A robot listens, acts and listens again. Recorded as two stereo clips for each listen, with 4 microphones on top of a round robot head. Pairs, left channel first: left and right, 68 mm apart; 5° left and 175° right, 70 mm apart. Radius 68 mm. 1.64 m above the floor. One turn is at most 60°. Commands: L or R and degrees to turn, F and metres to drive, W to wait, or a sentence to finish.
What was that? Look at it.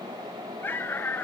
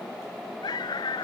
L30
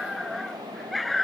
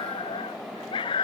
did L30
Facing the dog barking.